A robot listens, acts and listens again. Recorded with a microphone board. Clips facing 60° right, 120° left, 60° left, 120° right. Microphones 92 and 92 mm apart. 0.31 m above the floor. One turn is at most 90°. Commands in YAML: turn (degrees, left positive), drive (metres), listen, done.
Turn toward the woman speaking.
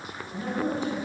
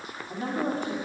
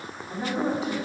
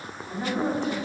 turn: 90
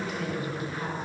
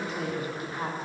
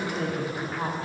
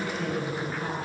turn: 70
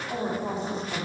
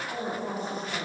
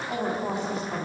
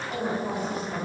done: "Facing the woman speaking, 2 to 4 m away."